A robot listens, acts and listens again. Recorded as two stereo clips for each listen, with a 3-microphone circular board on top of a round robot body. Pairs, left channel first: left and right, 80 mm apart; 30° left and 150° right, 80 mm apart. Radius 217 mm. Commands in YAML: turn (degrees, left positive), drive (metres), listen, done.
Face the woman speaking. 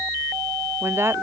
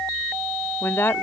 turn: -30
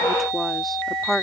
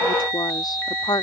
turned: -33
done: "Facing the woman speaking."